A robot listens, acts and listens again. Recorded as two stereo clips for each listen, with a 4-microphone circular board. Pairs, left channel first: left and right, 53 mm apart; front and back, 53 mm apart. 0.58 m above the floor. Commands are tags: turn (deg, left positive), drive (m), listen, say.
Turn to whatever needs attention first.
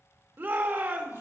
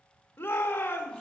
<turn deg="-45"/>
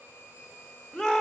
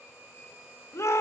<say>Found it: a shout, straight ahead, 1 to 2 m away.</say>